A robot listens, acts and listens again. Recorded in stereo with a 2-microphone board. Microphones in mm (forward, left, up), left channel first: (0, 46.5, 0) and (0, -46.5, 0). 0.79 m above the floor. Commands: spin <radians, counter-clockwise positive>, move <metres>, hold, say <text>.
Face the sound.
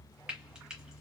spin -0.52
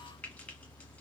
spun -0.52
hold
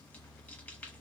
hold
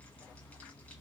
say I heard frying, but can't make it out now. It was about 25° left or 145° right.